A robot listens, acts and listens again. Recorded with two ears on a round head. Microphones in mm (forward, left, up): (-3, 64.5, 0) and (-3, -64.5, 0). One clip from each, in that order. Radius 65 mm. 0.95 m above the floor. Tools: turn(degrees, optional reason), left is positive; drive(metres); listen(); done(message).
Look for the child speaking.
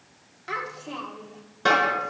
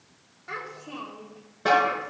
turn(degrees=65, reason="The child speaking: about 65° left or 115° left.")
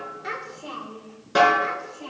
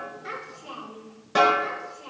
turn(degrees=40, reason="So it is at 40° left.")
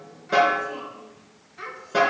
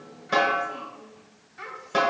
done("Facing the child speaking, 2 to 4 m away.")